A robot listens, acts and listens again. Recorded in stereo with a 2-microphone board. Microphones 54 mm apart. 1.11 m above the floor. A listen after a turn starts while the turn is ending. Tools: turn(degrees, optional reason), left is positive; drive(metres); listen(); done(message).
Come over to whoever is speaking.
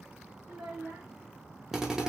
turn(degrees=-60, reason="The child speaking: about 60° right or 120° right.")
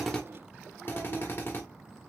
listen()
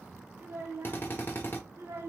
turn(degrees=-60, reason="So it is at 60° right.")
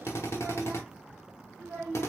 drive(metres=1.0)
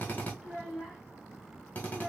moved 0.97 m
drive(metres=1.0)
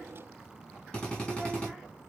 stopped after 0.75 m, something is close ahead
listen()
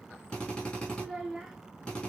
turn(degrees=-10, reason="The child speaking is now 10° right.")
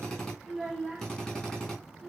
done("Arrived at the child speaking, straight ahead.")